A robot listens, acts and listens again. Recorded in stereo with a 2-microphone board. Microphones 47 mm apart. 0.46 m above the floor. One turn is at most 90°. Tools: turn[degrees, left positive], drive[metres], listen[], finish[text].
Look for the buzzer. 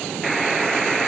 Action: turn[30]
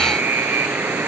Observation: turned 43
Thought: So it is at 45° right.
Action: turn[-45]
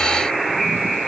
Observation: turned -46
Action: finish[Found it: a buzzer, straight ahead, 2 to 4 m away.]